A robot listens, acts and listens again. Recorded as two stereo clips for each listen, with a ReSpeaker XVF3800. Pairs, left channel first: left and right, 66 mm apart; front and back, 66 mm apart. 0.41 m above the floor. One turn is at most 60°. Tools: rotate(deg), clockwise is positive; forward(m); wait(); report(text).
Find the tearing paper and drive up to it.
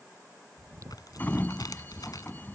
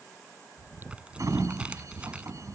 rotate(-60)
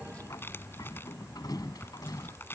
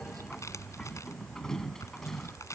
rotate(-35)
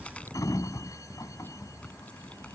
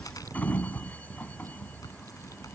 rotate(-20)
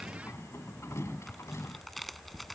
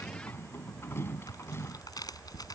forward(1.0)
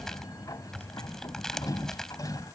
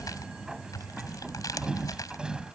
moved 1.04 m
rotate(-10)
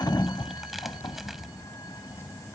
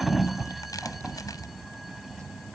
wait()
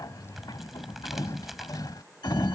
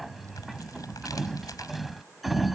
forward(1.0)
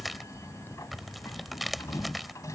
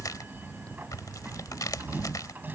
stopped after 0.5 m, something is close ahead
report("Arrived at the tearing paper, straight ahead.")